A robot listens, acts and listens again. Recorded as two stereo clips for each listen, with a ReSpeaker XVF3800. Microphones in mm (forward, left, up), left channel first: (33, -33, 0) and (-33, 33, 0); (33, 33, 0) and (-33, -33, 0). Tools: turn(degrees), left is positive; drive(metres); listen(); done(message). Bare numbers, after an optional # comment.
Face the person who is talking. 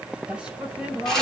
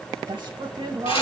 # The woman speaking: 150° right.
turn(-150)
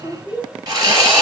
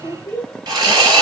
done("Found it: a woman speaking, straight ahead.")